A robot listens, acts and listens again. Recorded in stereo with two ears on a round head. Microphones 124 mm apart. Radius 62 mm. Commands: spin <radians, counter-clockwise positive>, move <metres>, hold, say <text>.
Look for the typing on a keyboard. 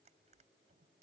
hold
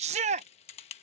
spin 0.79
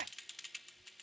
say Found it: typing on a keyboard, straight ahead.